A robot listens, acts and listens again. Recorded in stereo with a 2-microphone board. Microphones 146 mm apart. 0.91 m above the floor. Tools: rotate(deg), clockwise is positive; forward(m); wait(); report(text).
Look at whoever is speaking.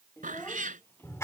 rotate(-15)
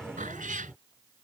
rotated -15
wait()
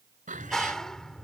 wait()
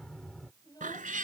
rotate(-30)
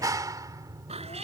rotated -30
wait()
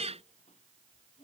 rotate(-125)
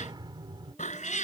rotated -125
wait()
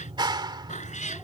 wait()
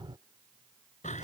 report("I heard a child speaking from this way, but can't make it out now.")